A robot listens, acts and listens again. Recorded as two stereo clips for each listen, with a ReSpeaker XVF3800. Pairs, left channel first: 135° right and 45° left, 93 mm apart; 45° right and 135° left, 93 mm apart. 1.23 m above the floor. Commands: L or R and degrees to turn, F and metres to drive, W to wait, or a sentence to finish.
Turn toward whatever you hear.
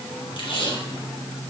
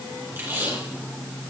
R160
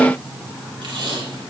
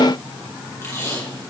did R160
L15
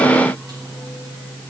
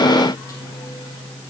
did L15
W
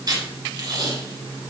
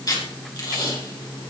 Found it: tape being pulled, straight ahead, 2 to 4 m away.